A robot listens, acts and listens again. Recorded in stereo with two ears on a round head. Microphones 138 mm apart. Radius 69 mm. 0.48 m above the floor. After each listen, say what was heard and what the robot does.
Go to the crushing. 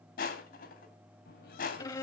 The crushing: about 65° left or 115° left. Turn 65° left.
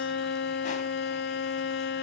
Keep listening.
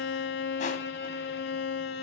Keep listening.
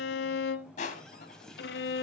So it is at 50° left. Turn 50° left.
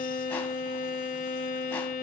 Keep listening.
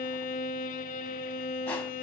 Keep listening.
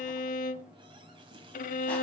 Facing where the crushing came from. I can't hear it now. I did not reach it.